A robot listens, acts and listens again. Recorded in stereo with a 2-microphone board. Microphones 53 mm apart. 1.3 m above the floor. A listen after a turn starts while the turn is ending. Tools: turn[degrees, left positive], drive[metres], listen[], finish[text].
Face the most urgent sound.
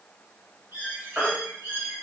Action: turn[-30]
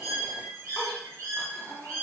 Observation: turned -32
Action: listen[]
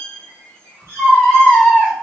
Thought: So it is at 15° left.
Action: turn[15]
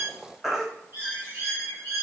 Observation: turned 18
Action: finish[Found it: a baby crying, straight ahead.]